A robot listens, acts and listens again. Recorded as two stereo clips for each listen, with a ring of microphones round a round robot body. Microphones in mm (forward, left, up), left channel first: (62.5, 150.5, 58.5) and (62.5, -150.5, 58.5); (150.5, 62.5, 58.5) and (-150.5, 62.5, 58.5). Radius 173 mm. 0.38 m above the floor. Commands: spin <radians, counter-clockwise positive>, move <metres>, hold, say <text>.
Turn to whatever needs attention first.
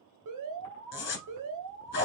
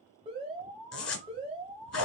spin -1.92
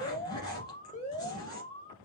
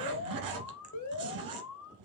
spin 0.35
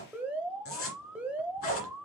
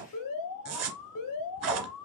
say Found it: an alarm, straight ahead.